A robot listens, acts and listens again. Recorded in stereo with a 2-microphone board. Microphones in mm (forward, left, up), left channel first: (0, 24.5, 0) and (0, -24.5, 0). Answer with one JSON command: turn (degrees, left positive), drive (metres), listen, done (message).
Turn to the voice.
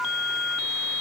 {"listen": true}
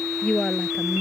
{"turn": 20}
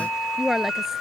{"done": "Found it: a woman speaking, straight ahead."}